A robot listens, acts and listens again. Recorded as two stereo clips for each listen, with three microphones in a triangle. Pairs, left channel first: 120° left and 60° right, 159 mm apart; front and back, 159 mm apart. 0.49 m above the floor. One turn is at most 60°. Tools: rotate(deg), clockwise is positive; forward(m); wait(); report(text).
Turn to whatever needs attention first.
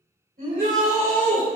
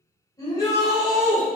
rotate(60)
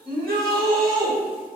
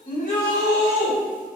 rotate(15)
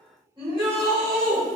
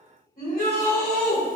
report("Found it: a shout, straight ahead.")